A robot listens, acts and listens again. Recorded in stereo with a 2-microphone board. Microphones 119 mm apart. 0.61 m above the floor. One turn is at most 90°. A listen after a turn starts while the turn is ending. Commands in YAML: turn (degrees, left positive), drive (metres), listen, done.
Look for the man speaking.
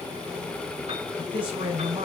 turn: -55
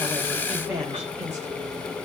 turn: -20
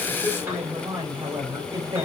turn: -30
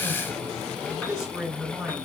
done: "Facing the man speaking."